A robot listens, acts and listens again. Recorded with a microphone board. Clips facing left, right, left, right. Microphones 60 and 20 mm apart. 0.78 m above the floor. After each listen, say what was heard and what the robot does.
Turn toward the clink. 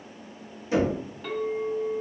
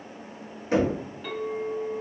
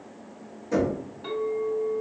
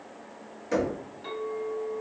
Turn 30° right.
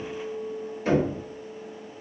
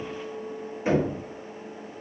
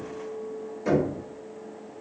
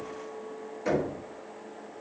So it is at 145° right. Turn 145° right.
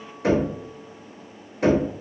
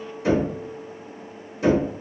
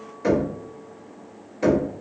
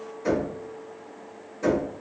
The clink is now 15° right. Turn 15° right.
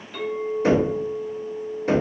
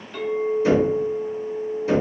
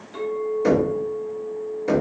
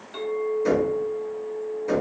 Facing the clink.